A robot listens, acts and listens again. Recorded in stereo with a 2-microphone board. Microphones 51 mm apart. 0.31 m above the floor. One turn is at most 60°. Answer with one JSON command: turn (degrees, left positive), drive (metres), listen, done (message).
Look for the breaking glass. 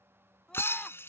{"turn": 55}
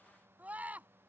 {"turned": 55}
{"listen": true}
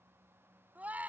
{"done": "I heard breaking glass, but can't make it out now. It was about straight ahead or 70° left."}